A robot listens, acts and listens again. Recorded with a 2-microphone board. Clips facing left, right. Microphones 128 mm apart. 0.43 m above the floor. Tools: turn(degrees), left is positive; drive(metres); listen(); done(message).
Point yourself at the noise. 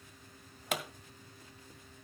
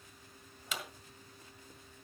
turn(degrees=60)
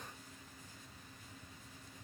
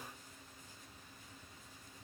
listen()
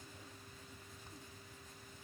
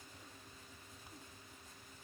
done("I heard a pop, but can't make it out now. It was about straight ahead or 60° left.")